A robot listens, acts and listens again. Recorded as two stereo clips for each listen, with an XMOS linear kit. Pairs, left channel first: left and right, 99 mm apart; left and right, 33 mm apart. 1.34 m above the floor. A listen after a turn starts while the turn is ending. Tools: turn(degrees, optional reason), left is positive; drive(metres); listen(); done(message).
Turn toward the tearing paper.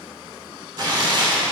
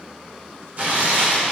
turn(degrees=-50, reason="The tearing paper: about 50° right or 130° right.")
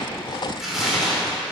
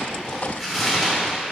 done("Facing the tearing paper, 2 to 4 m away.")